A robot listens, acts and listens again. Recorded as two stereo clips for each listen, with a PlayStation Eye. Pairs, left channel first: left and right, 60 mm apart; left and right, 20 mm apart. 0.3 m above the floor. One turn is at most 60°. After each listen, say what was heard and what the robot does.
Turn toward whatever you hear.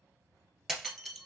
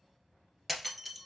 Turn 30° right.
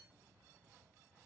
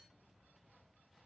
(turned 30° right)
Keep listening.
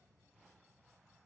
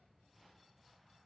I heard breaking glass, but can't make it out now. It was about 25° left or 145° right.